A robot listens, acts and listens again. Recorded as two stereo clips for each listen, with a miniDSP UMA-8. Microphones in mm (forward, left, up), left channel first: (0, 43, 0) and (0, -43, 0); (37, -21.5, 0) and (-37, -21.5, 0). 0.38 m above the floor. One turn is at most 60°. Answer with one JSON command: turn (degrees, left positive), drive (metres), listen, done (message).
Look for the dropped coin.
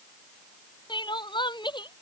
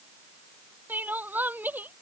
{"listen": true}
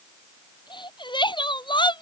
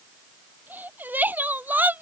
{"listen": true}
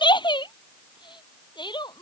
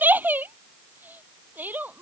{"done": "I can't make out a dropped coin, only crying."}